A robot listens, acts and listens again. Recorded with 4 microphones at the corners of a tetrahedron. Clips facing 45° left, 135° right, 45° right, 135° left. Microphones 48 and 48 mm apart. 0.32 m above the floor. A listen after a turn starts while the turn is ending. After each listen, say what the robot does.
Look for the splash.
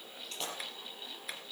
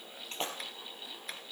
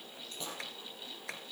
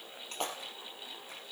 Turn 170° left.
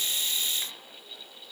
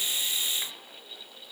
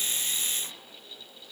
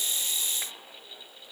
Facing where the splash came from. I can't hear it now.